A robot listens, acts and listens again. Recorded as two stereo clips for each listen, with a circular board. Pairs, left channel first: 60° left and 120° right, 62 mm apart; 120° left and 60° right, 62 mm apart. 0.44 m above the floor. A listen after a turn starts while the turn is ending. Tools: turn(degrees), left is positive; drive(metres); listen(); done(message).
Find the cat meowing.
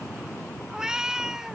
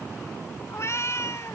turn(degrees=160)
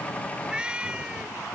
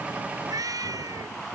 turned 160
turn(degrees=-45)
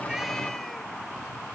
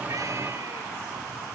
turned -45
listen()
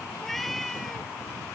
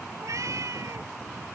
turn(degrees=-25)
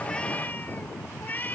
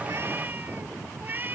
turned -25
done("Facing the cat meowing.")